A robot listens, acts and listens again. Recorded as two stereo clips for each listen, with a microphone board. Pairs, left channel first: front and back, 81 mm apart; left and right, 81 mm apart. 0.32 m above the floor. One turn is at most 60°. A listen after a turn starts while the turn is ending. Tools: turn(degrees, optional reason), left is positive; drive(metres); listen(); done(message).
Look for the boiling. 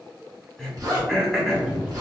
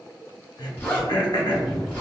done("Found it: boiling, straight ahead.")